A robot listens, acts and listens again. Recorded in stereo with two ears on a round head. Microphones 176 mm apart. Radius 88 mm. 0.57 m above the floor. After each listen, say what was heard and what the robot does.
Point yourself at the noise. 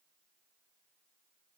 Keep listening.
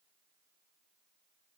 Keep listening.
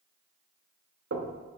The knocking: about 60° right or 120° right. Turn 60° right.
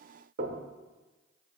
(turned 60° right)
So it is at 50° right. Turn 50° right.
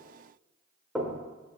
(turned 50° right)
Facing the knocking, 1 to 2 m away.